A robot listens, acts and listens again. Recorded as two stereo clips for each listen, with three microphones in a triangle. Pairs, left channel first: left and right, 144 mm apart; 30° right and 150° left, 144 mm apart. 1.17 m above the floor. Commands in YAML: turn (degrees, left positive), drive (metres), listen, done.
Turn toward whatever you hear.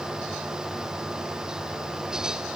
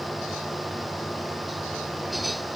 listen: true
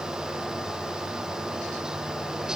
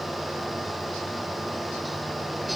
listen: true
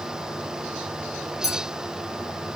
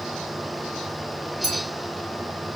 turn: 120
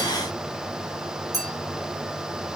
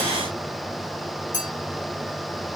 turn: -30
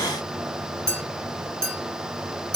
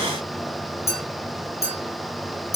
done: "Found it: a clink, straight ahead."